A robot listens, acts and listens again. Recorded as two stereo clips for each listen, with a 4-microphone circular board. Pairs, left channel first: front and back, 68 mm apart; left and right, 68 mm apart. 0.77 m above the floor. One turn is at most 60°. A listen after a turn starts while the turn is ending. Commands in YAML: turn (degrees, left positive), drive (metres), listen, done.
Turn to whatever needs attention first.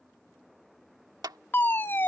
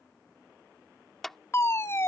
turn: 50
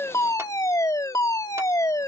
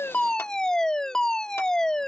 turn: 10
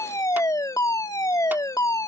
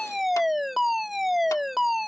done: "Facing the fire alarm."